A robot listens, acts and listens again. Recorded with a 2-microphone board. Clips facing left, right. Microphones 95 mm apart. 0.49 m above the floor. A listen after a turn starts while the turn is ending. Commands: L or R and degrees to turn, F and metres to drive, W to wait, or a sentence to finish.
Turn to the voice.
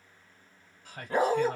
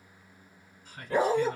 L65
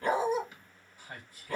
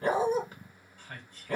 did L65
L15
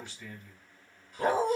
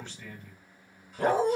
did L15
Found it: a man speaking, straight ahead, 1 to 2 m away.